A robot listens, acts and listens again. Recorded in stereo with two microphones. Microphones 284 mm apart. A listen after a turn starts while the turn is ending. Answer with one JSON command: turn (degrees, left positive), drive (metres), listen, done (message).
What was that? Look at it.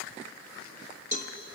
{"turn": 30}
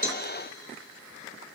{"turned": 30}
{"listen": true}
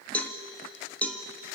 {"done": "Facing the cowbell."}